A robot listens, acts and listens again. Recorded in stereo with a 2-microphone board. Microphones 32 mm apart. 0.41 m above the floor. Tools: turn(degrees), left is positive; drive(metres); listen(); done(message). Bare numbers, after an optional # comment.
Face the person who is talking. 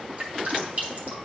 listen()
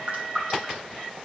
listen()
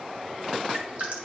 done("I can't make out anyone speaking, only dripping.")